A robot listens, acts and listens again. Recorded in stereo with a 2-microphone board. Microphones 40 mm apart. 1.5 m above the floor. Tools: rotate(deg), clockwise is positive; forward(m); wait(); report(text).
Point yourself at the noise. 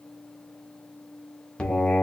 rotate(-20)
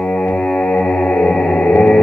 rotate(-135)
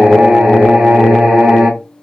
rotate(15)
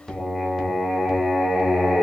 report("Facing the singing.")